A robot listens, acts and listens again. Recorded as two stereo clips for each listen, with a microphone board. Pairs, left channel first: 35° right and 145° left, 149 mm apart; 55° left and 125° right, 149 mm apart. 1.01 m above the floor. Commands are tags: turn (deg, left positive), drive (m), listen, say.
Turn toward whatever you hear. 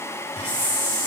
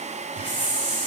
<say>Facing the hiss, 2 to 4 m away.</say>